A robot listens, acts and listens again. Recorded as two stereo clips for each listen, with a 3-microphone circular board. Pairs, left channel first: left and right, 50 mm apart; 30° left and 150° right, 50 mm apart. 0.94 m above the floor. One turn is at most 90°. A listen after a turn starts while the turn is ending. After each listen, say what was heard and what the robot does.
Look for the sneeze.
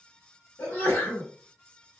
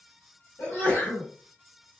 The sneeze: 65° left. Turn 65° left.
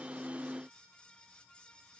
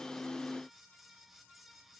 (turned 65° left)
I heard a sneeze from this way, but can't make it out now.